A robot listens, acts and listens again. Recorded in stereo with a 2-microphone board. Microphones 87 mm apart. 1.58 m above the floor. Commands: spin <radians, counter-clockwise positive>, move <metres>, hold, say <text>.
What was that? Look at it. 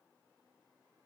hold
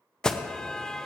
spin 0.52
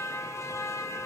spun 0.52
spin 2.44
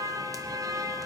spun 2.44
spin -0.87
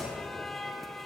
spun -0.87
say Facing the alarm, under 1 m away.